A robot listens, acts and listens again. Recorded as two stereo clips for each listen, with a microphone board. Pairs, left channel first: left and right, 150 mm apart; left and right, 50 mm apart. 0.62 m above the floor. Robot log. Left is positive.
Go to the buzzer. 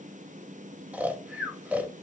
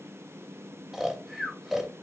cmd idle
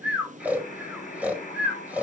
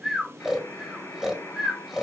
note: The buzzer: about 75° left or 105° left.
cmd yaw +75
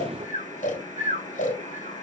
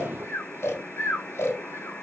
note: So it is at 30° left.
cmd yaw +30
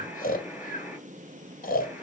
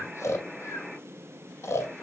cmd fwd 1.0
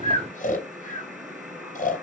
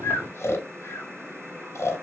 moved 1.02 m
cmd fwd 1.0
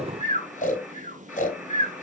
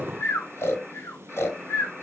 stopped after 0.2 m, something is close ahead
end: Blocked. The buzzer is further on, straight ahead.